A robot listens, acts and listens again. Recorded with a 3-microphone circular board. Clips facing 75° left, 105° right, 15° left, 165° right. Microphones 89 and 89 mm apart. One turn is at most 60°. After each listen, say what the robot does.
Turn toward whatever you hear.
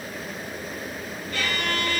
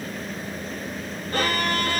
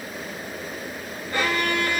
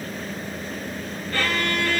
Turn 60° right.
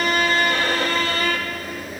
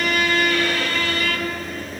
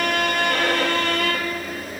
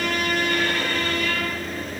Turn 20° left.
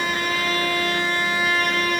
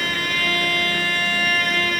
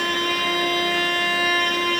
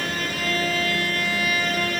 Turn 10° left.
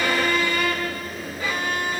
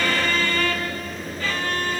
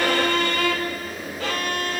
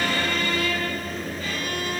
Facing the violin, 2 to 4 m away.